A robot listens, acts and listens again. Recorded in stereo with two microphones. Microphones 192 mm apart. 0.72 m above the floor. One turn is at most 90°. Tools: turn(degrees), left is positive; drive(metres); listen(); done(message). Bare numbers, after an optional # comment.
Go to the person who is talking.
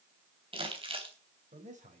# The man speaking: about 40° right or 140° right.
turn(-40)
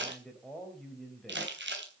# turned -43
drive(1.0)
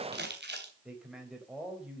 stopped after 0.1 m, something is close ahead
done("Blocked. The man speaking is further on, straight ahead.")